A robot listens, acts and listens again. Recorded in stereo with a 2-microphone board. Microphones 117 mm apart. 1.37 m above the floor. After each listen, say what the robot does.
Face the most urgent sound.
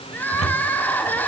Turn 30° left.
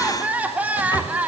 Turn 15° right.
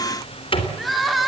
Facing the crying.